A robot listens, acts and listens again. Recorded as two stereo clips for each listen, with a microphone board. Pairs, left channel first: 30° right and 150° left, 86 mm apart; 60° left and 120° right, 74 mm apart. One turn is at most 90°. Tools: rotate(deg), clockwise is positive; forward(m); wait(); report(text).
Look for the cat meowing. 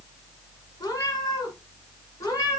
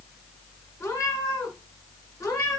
rotate(-15)
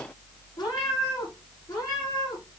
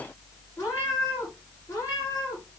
rotate(-10)
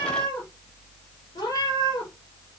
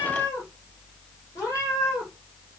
report("Facing the cat meowing.")